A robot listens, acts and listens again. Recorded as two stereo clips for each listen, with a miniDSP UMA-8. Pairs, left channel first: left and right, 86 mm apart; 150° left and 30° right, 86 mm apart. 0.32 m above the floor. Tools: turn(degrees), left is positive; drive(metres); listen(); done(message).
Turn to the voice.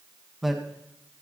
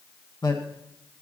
turn(degrees=180)
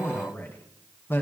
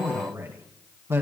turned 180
turn(degrees=30)
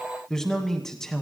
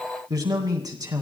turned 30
done("Facing the man speaking.")